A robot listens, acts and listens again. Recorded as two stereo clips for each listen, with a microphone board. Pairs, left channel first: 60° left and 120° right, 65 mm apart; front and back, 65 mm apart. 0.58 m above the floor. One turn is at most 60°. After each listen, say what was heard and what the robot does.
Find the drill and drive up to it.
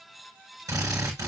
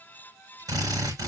The drill: 155° right. Turn 60° right.
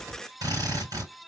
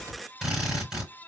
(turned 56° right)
The drill is now 95° right. Turn 60° right.
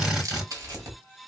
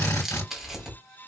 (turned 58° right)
The drill is now 40° right. Turn 40° right.
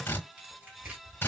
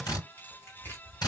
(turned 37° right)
Drive 1.0 m forward.
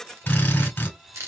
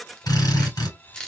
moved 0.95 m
Drive 1.0 m forward.
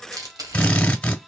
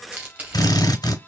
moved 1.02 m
The drill is now 10° right. Turn 10° right.
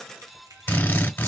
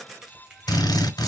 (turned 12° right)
Drive 1.0 m forward.
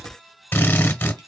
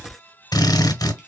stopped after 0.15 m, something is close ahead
Arrived at the drill, straight ahead.